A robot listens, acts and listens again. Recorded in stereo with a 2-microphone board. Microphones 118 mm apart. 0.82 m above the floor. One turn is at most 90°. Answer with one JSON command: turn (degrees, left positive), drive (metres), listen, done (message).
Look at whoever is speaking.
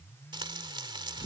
{"listen": true}
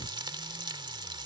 {"listen": true}
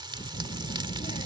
{"turn": 70}
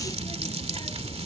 {"turn": 40}
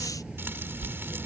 {"done": "Found it: a child speaking, straight ahead."}